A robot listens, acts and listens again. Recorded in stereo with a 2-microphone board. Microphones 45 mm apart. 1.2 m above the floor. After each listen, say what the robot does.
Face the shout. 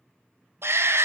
Turn 70° right.
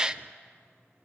Turn 20° right.
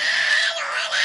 Facing the shout, under 1 m away.